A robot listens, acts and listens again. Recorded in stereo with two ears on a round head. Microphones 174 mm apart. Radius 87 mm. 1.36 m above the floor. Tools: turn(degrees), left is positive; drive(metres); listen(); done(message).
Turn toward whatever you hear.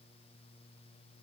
listen()
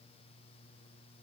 listen()
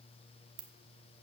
turn(degrees=-65)
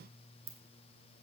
turn(degrees=-20)
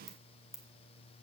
done("Found it: a ringtone, straight ahead, 1 to 2 m away.")